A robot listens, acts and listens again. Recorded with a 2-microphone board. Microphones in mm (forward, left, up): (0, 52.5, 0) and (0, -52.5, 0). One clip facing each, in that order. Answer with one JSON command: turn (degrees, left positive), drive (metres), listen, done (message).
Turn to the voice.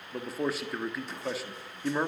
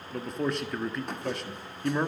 {"turn": 30}
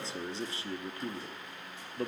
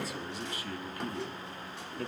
{"turn": 145}
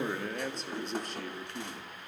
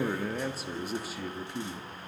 {"done": "Found it: a man speaking, straight ahead."}